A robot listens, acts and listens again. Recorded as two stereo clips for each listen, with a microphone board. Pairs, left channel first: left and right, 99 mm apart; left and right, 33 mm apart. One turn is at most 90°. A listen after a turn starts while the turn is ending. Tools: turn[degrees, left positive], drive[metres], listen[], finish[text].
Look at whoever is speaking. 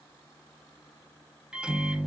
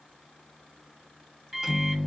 Action: listen[]
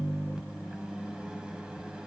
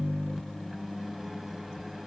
Action: listen[]
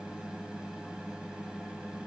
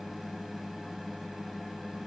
Action: finish[I can't make out anyone speaking to turn to.]